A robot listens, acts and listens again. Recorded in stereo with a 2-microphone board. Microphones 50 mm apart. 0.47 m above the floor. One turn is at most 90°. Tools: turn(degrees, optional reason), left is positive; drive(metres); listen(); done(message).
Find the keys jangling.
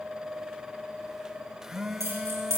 turn(degrees=-75, reason="The keys jangling: about 75° right or 105° right.")
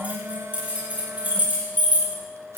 turn(degrees=-35, reason="So it is at 35° right.")
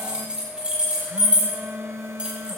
turn(degrees=-20, reason="The keys jangling is now 20° right.")
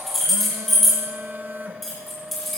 done("Facing the keys jangling.")